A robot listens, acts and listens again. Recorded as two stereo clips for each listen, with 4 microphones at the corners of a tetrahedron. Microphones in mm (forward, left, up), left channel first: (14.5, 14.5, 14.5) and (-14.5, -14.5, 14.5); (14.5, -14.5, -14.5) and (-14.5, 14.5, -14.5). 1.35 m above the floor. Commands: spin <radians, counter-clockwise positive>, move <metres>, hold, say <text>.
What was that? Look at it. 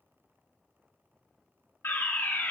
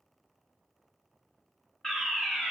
spin 0.61
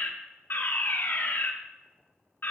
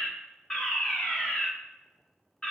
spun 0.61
spin 0.35
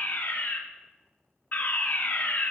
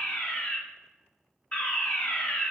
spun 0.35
say Found it: a fire alarm, straight ahead.